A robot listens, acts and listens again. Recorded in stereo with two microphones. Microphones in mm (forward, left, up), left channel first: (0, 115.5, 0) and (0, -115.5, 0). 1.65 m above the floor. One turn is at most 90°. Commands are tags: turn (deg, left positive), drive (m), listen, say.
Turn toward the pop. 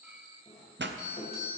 <turn deg="-50"/>
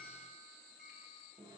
<listen/>
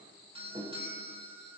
<say>I heard a pop, but can't make it out now. It was about straight ahead or 80° right.</say>